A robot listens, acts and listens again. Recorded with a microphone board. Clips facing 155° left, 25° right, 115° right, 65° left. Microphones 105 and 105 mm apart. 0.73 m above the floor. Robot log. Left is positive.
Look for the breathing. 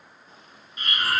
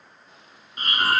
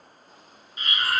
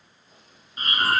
note: The breathing: 15° left.
cmd yaw +15
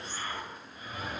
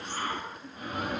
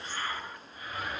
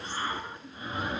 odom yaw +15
end: Found it: breathing, straight ahead.